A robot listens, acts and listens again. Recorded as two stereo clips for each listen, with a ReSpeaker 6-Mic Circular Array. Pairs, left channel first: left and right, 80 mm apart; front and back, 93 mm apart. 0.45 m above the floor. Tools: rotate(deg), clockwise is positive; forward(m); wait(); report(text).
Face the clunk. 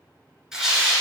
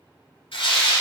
wait()
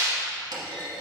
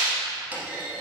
rotate(110)
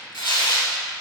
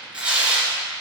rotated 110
report("I heard a clunk from this way, but can't make it out now.")